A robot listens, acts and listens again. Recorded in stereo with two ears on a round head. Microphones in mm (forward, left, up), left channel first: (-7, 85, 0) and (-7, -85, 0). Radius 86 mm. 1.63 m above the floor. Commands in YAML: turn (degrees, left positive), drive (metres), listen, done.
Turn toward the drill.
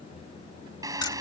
turn: -20
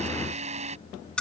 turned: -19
turn: -145
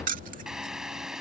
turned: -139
done: "Found it: a drill, straight ahead."